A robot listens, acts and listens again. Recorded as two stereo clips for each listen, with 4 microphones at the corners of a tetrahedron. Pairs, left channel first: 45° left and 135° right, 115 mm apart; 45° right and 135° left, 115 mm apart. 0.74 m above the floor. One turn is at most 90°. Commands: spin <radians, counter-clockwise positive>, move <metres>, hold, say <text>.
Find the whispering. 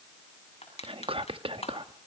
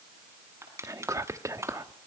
spin -1.57
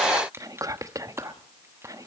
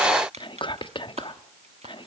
spin -1.40
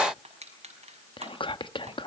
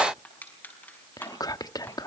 say Found it: whispering, straight ahead.